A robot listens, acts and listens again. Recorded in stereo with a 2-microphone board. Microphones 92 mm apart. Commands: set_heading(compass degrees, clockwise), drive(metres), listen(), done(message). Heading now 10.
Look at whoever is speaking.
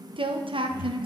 set_heading(80)
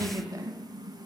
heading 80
set_heading(120)
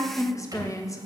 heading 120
set_heading(85)
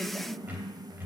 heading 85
set_heading(75)
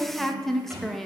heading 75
done("Facing the woman speaking.")